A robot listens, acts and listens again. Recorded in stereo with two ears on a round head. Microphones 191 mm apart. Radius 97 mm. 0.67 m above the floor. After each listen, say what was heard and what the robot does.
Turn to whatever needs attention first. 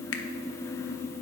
Keep listening.
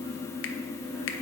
Keep listening.
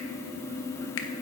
I can't make out anything urgent, only a finger snap.